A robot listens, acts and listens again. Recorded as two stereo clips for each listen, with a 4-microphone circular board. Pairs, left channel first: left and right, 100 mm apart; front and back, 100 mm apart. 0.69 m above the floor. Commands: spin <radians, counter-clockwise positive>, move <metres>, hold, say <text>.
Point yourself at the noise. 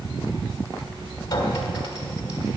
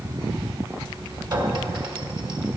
spin 2.44
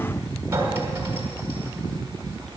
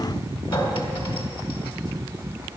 spin -0.52
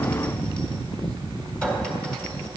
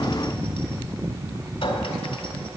spin 0.17
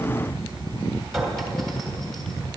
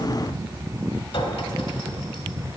say Found it: a clink, straight ahead, 1 to 2 m away.